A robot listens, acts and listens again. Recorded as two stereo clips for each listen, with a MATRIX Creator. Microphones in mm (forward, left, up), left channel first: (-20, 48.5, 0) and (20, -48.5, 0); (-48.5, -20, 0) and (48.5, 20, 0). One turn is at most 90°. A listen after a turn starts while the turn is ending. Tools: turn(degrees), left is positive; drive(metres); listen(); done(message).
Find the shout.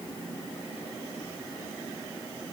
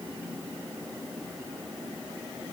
listen()
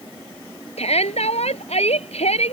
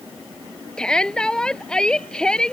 turn(degrees=90)
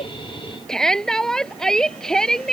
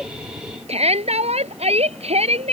turn(degrees=25)
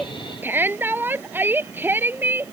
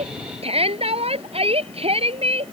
done("Found it: a shout, straight ahead.")